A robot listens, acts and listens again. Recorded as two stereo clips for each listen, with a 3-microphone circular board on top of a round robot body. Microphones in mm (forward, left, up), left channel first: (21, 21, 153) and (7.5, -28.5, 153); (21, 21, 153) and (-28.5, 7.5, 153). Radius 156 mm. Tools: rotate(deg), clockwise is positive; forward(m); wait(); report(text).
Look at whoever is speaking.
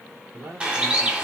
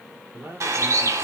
rotate(130)
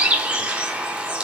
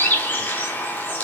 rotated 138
rotate(-10)
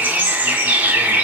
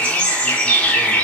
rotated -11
wait()
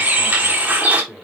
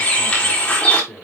report("Found it: a man speaking, straight ahead.")